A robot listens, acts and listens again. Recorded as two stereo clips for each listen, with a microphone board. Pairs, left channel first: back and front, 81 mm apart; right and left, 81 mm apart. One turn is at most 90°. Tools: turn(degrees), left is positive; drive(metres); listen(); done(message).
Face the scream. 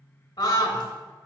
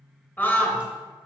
turn(degrees=-90)
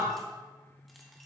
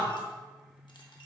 turn(degrees=-45)
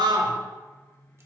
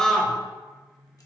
turn(degrees=-10)
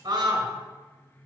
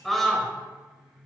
done("Found it: a scream, straight ahead, 1 to 2 m away.")